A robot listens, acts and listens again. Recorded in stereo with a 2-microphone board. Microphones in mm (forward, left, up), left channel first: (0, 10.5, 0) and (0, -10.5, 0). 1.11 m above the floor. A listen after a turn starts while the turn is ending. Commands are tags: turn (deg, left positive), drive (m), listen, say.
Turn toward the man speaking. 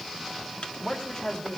<turn deg="65"/>
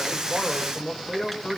<turn deg="35"/>
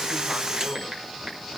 <listen/>
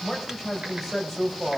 <turn deg="-10"/>
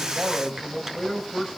<say>Facing the man speaking.</say>